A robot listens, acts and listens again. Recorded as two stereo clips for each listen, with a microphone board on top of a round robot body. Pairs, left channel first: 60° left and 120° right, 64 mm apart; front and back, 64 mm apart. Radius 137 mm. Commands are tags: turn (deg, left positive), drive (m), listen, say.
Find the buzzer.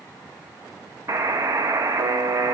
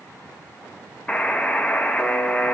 <turn deg="-75"/>
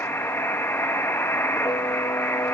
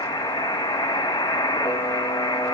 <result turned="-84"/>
<say>Facing the buzzer, under 1 m away.</say>